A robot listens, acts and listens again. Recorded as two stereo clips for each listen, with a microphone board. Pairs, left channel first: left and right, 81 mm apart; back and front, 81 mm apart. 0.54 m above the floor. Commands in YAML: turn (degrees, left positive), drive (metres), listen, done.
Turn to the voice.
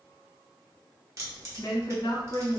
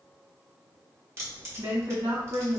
turn: 50
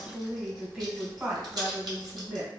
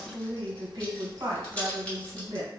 turn: -10
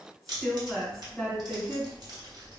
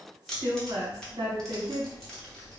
done: "Facing the woman speaking, 1 to 2 m away."